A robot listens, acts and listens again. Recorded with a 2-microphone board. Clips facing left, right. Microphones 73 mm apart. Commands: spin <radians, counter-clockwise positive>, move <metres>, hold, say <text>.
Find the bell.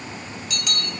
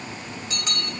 spin -0.52
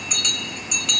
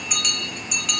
say Facing the bell, under 1 m away.